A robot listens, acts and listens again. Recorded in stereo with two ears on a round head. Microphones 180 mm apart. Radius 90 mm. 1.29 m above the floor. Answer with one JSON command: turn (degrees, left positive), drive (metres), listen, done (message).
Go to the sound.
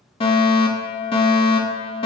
{"turn": 30}
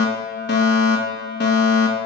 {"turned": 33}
{"turn": 115}
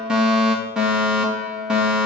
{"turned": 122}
{"drive": 1.0}
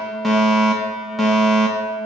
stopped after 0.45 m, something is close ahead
{"done": "Something is in my way. I am facing the fire alarm but have not reached it."}